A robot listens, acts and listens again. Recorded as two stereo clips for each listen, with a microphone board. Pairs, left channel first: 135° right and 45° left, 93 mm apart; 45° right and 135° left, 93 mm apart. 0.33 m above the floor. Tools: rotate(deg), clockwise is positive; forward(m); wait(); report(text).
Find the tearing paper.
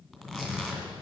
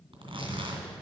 rotate(-135)
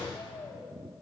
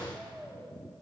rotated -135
wait()
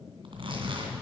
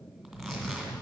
rotate(-45)
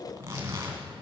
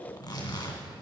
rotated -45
rotate(10)
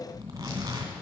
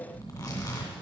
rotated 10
report("Facing the tearing paper, 2 to 4 m away.")